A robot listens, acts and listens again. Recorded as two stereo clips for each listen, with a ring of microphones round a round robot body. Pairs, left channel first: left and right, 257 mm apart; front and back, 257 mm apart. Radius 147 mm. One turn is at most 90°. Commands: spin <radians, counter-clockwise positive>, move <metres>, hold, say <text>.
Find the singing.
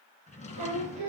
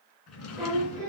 spin -1.57
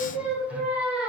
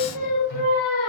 say Facing the singing, over 4 m away.